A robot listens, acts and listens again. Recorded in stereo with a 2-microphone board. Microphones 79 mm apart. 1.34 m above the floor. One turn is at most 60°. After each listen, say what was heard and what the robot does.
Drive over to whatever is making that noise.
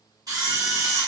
The camera shutter: about 55° right or 125° right. Turn 55° right.
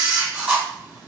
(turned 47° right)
So it is at 15° right. Turn 15° right.
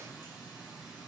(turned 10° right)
Keep listening.
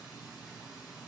Keep listening.
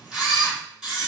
Drive 1.0 m forward.
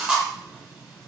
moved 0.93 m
The camera shutter is now 15° right. Turn 15° right.
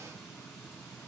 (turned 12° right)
Keep listening.
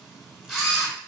Drive 1.0 m forward.
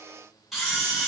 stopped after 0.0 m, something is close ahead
Arrived at the camera shutter, straight ahead.